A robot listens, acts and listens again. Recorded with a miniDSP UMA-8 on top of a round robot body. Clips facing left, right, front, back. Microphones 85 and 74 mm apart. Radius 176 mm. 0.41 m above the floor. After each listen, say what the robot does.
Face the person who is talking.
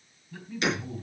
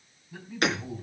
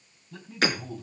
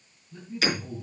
Turn 15° right.
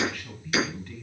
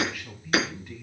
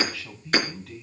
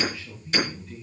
Turn 10° right.
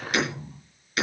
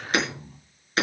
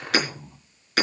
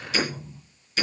Facing the man speaking, over 4 m away.